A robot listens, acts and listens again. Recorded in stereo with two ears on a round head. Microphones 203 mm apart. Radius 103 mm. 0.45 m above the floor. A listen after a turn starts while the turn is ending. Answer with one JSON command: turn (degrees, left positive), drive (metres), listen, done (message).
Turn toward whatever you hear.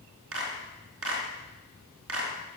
{"turn": -70}
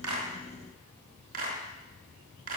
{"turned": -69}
{"turn": -40}
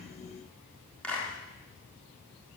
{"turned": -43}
{"done": "Found it: a clap, straight ahead."}